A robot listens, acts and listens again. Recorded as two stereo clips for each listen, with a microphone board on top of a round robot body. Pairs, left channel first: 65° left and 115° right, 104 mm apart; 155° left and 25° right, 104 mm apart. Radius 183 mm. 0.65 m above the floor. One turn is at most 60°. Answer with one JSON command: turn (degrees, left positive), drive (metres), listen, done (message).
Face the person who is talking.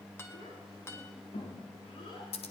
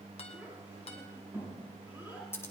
{"turn": 50}
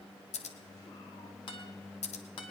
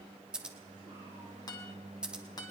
{"listen": true}
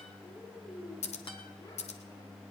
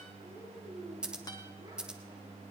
{"turn": 20}
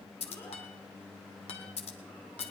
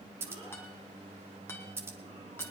{"listen": true}
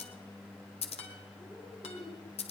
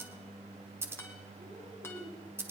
{"listen": true}
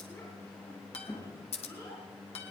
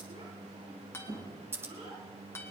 {"done": "Found it: a child speaking, straight ahead, over 4 m away."}